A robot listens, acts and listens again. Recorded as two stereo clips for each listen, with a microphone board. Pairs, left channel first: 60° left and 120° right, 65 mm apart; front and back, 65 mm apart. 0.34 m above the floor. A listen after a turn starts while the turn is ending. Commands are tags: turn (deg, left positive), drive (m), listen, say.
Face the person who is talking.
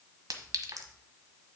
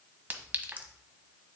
<listen/>
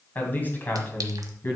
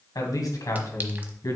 <turn deg="10"/>
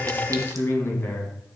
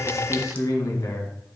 <turn deg="15"/>
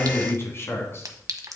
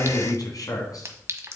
<turn deg="15"/>
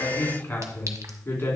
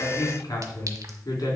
<say>Found it: a man speaking, straight ahead.</say>